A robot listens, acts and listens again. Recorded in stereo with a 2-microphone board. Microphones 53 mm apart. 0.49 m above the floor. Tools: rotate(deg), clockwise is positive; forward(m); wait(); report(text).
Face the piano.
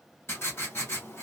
wait()
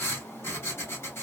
wait()
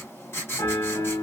rotate(-90)
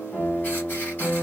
report("Facing the piano.")